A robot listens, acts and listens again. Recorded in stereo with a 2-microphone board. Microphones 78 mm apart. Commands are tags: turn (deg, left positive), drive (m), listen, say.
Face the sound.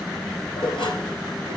<turn deg="90"/>
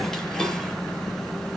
<say>Found it: dishes clattering, straight ahead.</say>